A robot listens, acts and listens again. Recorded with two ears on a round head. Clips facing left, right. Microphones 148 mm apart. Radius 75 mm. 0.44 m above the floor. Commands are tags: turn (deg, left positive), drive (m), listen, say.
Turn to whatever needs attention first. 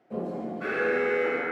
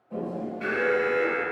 <turn deg="-25"/>
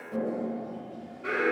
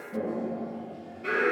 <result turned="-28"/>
<say>Found it: an alarm, straight ahead.</say>